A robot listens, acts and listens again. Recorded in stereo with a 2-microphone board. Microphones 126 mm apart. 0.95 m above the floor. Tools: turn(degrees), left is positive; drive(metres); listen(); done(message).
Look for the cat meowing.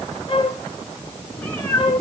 turn(degrees=30)
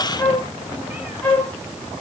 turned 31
listen()
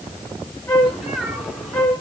done("Found it: a cat meowing, straight ahead.")